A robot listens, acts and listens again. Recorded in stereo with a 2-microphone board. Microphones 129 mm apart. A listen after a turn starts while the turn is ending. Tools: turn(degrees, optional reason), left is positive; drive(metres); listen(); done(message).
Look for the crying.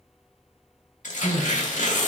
turn(degrees=15, reason="The crying: about 15° left or 165° left.")
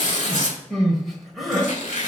done("Found it: crying, straight ahead, 1 to 2 m away.")